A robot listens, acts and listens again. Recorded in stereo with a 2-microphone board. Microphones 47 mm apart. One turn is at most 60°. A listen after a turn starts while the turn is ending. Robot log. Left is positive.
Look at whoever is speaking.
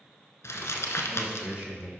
note: The man speaking: about 25° right or 155° right.
cmd yaw -25
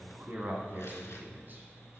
note: So it is at 130° right.
cmd yaw -60
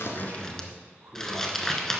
note: The man speaking is now 65° right.
cmd yaw -60
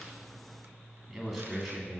end: Facing the man speaking, 2 to 4 m away.